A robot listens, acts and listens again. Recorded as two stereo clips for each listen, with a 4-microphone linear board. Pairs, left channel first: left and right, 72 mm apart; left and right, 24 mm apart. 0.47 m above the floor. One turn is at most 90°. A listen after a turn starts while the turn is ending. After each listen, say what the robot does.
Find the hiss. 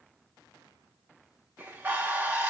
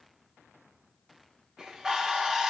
Keep listening.
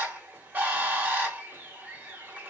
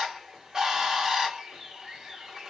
Keep listening.
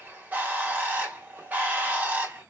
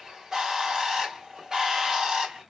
I can't make out a hiss, only a bird.